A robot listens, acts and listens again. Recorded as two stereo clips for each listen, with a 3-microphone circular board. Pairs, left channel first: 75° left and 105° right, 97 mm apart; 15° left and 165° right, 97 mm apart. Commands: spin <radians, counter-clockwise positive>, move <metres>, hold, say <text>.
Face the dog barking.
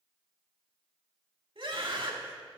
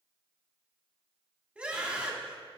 hold
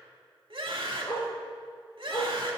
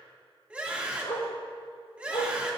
spin 0.44
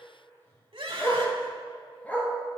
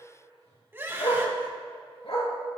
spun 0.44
say Facing the dog barking.